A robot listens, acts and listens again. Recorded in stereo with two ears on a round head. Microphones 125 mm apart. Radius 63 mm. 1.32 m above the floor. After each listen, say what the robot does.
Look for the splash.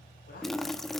Turn 30° left.
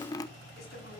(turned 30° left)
Turn 150° left.
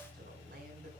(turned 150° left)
Facing where the splash came from. I can't hear it now.